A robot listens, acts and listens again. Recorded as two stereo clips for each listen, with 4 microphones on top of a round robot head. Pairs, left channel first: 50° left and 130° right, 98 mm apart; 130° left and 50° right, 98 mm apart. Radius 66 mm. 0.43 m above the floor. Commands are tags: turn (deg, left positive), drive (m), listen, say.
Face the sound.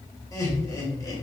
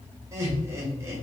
<say>Facing the laughter, 1 to 2 m away.</say>